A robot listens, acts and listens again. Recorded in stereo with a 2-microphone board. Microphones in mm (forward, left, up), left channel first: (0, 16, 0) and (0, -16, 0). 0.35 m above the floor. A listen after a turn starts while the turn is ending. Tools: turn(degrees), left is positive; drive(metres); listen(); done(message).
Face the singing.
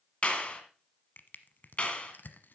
listen()
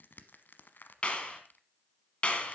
listen()
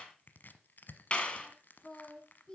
turn(degrees=30)
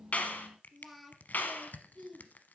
done("Facing the singing, 2 to 4 m away.")